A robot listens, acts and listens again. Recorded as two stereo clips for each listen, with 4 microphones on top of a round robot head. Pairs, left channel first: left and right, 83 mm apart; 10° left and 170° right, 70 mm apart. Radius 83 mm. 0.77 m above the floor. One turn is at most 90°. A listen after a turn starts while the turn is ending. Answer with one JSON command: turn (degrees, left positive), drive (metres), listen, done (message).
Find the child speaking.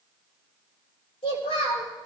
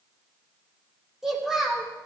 {"turn": 90}
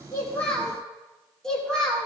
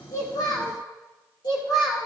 {"done": "Facing the child speaking, over 4 m away."}